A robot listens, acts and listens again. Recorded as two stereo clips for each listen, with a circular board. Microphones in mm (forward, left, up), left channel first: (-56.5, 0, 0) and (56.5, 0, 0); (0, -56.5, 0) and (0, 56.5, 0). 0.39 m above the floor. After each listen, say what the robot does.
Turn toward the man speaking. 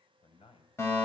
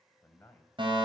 Turn 165° right.
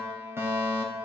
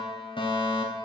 Keep listening.
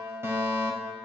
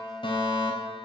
Keep listening.
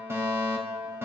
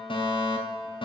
Facing where the man speaking came from. I can't hear it now.